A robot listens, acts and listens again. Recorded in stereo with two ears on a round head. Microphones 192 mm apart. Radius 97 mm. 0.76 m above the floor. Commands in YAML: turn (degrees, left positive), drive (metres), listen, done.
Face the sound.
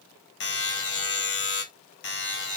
turn: 50
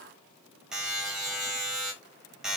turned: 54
done: "Found it: a buzzer, straight ahead, 1 to 2 m away."